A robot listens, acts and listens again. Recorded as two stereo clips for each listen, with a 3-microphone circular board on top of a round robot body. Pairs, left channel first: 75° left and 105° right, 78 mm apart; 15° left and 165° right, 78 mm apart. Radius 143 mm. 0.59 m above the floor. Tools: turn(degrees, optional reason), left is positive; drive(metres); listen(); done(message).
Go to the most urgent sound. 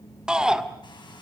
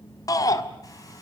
turn(degrees=-25, reason="The shout: 25° right.")
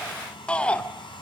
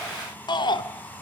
drive(metres=1.0)
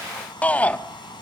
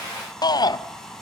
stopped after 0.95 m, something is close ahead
done("I am next to the shout.")